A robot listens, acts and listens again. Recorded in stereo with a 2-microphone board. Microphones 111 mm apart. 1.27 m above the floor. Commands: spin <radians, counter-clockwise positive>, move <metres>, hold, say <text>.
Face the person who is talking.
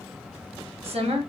spin -1.13
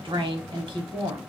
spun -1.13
spin -0.87
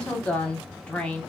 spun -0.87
spin 0.17
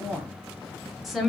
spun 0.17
say Found it: a woman speaking, straight ahead, under 1 m away.